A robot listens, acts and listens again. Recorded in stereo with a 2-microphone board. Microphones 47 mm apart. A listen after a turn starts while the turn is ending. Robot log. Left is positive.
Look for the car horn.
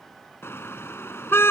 note: The car horn: about 60° left or 120° left.
cmd yaw +60
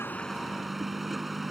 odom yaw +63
end: Found it: a car horn, straight ahead.